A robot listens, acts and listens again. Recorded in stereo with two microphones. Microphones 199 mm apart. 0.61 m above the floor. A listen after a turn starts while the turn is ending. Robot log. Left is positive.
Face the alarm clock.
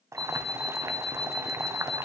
cmd yaw +30
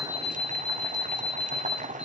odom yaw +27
note: So it is at 150° left.
cmd yaw +150
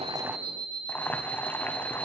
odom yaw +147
end: Facing the alarm clock.